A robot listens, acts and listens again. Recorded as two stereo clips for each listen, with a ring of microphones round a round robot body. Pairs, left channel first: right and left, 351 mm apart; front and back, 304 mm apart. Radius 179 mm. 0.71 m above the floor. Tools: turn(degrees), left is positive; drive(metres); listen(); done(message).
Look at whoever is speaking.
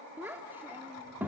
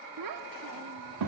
turn(degrees=175)
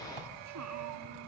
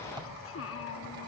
turn(degrees=45)
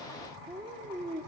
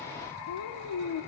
turn(degrees=10)
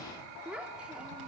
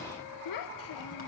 done("Facing the child speaking.")